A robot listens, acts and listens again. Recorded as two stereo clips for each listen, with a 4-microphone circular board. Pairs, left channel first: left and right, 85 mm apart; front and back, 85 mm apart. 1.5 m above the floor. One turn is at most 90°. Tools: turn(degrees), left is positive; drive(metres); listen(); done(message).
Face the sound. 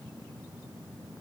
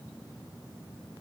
listen()
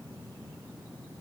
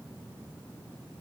listen()
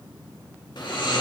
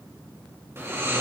turn(degrees=90)
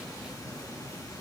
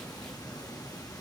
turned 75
turn(degrees=40)
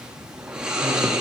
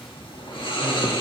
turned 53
turn(degrees=-10)
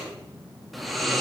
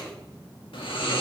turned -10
done("Facing the snoring, 2 to 4 m away.")